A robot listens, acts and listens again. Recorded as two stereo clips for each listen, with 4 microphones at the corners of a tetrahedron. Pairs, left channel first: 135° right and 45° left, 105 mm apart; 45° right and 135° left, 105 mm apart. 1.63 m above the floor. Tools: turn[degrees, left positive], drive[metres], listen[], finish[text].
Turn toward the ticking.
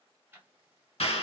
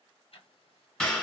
Thought: The ticking: 25° right.
Action: turn[-25]
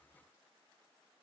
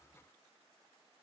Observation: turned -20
Action: listen[]
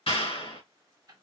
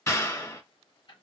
Action: finish[Found it: ticking, straight ahead.]